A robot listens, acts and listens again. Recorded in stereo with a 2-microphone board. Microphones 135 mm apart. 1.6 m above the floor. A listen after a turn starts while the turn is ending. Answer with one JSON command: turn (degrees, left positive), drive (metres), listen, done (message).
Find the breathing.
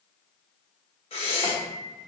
{"turn": 45}
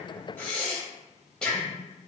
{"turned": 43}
{"done": "Found it: breathing, straight ahead, 1 to 2 m away."}